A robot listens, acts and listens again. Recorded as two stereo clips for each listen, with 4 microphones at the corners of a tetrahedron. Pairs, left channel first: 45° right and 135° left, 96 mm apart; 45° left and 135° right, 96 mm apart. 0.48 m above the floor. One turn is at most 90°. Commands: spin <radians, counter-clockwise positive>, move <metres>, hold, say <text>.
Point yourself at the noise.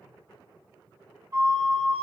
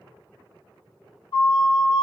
spin 1.40
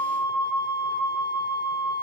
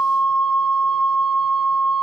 spin -0.17
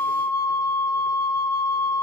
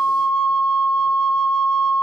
say Facing the flute, under 1 m away.